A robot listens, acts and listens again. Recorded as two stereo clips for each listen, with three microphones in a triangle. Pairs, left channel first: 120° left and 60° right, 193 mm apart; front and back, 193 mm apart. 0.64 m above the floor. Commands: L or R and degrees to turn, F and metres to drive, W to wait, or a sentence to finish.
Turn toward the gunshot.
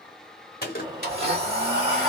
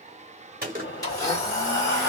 L150
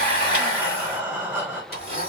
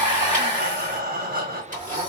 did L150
Facing where the gunshot came from. I can't hear it now.